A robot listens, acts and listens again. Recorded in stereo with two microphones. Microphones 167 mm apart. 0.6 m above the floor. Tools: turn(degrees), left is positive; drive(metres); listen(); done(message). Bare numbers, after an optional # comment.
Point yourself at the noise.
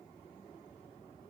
listen()
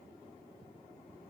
listen()
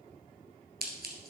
turn(-90)
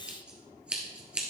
done("Found it: scissors, straight ahead, 1 to 2 m away.")